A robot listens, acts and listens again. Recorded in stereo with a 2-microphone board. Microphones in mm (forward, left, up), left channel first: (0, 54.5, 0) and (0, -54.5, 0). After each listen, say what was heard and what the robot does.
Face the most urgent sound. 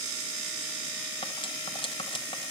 Keep listening.
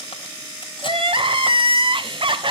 The crying: about 50° right or 130° right. Turn 50° right.
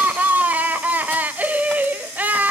So it is at 20° right. Turn 20° right.
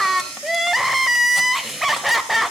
Facing the crying.